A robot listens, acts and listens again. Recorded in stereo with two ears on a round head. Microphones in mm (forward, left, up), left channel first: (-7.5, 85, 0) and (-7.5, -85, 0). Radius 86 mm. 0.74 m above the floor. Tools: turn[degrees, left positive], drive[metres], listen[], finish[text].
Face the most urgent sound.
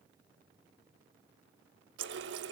Action: listen[]
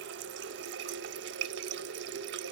Action: listen[]
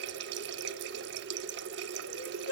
Action: turn[90]
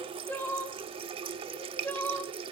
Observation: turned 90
Thought: So it is at 10° left.
Action: turn[10]
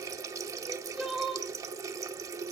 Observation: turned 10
Action: finish[Facing the crying.]